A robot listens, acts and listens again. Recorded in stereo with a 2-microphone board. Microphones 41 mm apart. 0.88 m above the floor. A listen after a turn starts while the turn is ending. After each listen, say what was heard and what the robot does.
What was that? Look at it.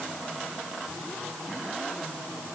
Keep listening.
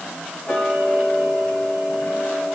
The ticking: about 25° left or 155° left. Turn 25° left.
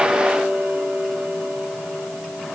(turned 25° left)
Found it: ticking, straight ahead.